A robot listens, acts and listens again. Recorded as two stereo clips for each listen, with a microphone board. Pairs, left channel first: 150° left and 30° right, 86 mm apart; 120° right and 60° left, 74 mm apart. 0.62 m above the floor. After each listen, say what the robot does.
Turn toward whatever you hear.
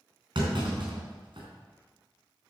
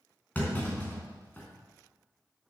Turn 50° right.
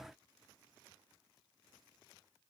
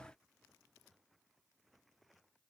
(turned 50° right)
I heard a clunk from this way, but can't make it out now.